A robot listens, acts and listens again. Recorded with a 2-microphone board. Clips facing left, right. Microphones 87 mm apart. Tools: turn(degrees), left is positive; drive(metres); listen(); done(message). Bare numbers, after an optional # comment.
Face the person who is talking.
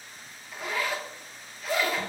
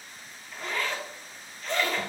listen()
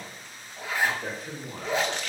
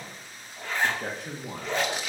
# The man speaking: about 75° right or 105° right.
turn(-75)
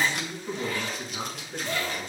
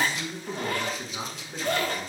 done("Facing the man speaking, 1 to 2 m away.")